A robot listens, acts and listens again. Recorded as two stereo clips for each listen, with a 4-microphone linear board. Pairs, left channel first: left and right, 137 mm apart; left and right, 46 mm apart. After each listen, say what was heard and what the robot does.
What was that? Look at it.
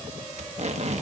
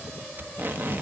The tape being pulled: about 55° right or 125° right. Turn 55° right.
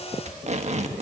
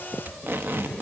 So it is at 65° right. Turn 65° right.
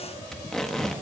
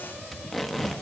Found it: tape being pulled, straight ahead.